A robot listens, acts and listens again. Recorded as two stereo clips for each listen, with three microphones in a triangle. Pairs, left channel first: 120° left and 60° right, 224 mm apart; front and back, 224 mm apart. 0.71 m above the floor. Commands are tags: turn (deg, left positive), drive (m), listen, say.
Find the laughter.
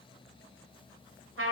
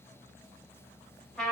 <listen/>
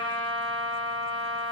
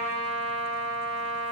<listen/>
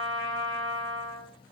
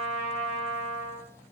<say>I can't make out laughter to turn to.</say>